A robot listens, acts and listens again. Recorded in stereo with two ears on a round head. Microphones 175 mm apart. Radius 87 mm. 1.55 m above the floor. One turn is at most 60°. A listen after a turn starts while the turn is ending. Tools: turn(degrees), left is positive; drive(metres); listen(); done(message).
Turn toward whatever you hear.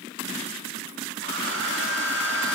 turn(degrees=-60)
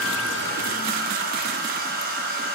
turn(degrees=-50)
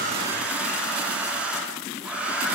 done("Found it: a hair dryer, straight ahead.")